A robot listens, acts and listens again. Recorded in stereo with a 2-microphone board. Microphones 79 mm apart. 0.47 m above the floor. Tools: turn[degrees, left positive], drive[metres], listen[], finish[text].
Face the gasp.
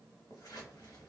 Action: listen[]
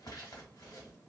Action: listen[]
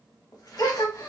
Thought: The gasp: about 55° left or 125° left.
Action: turn[55]
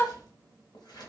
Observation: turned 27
Thought: So it is at 30° left.
Action: turn[30]
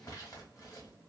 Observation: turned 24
Action: finish[Facing where the gasp came from. I can't hear it now.]